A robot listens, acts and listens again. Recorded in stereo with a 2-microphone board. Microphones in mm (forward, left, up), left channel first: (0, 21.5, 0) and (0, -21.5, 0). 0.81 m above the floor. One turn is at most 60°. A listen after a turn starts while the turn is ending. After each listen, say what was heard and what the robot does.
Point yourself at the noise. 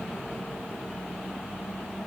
Keep listening.
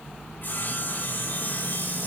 The sawing: about 50° left or 130° left. Turn 50° left.
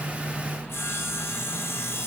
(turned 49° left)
So it is at 80° left. Turn 60° left.
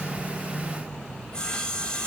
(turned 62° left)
The sawing is now 20° left. Turn 20° left.
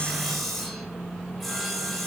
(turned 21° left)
Found it: sawing, straight ahead, over 4 m away.